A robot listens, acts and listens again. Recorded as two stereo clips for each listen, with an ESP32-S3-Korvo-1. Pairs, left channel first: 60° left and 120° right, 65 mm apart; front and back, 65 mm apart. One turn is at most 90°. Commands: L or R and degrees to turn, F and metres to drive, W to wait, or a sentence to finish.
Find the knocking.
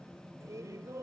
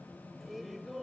W
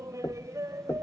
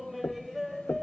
L40
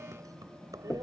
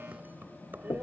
L10
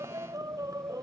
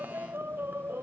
W
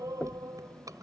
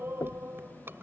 Found it: knocking, straight ahead.